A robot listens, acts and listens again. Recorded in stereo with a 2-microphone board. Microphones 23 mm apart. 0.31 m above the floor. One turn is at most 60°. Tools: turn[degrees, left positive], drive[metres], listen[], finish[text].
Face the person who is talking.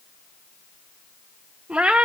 Action: listen[]
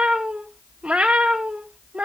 Action: listen[]
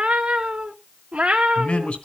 Thought: The man speaking: about 65° left or 115° left.
Action: turn[60]
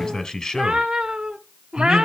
Thought: So it is at 35° left.
Action: turn[35]
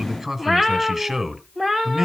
Thought: The man speaking is now 10° right.
Action: turn[-10]
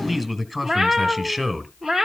Action: finish[Found it: a man speaking, straight ahead, 2 to 4 m away.]